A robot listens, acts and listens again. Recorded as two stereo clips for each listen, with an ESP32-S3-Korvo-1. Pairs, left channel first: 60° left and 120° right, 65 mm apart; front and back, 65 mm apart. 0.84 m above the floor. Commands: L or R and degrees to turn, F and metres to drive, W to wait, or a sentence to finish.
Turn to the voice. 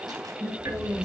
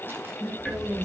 R55
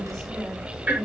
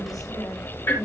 R30
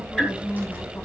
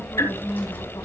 Facing the woman speaking.